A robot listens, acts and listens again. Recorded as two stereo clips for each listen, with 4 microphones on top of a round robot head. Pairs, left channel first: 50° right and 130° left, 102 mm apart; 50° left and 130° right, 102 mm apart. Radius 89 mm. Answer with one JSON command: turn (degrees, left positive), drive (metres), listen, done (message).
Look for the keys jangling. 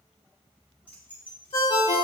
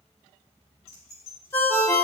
{"turn": 25}
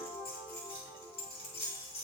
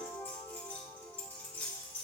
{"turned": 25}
{"turn": -20}
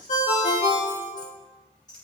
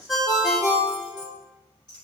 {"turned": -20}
{"done": "Facing the keys jangling, 1 to 2 m away."}